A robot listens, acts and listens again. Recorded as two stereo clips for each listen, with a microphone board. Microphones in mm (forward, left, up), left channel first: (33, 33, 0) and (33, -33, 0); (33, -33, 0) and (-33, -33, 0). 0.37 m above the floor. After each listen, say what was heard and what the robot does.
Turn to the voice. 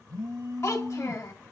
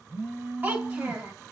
The child speaking: 120° left. Turn 120° left.
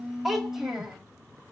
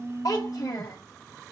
Found it: a child speaking, straight ahead.